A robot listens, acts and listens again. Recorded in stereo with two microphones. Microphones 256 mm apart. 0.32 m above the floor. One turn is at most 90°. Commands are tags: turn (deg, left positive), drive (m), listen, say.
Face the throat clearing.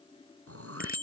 <turn deg="-70"/>
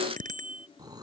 <turn deg="-15"/>
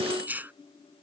<say>Found it: throat clearing, straight ahead.</say>